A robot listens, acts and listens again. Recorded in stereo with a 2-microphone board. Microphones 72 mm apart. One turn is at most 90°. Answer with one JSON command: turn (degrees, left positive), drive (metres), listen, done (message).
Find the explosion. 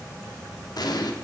{"turn": 65}
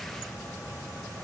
{"listen": true}
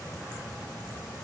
{"done": "I heard an explosion, but can't make it out now. It was about straight ahead or 50° left."}